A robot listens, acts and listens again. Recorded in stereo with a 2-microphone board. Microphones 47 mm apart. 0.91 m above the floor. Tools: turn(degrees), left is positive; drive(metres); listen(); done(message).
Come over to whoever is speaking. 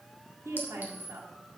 turn(degrees=-90)
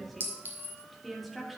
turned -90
drive(metres=1.0)
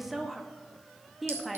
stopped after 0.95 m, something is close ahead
done("Arrived at the woman speaking, straight ahead.")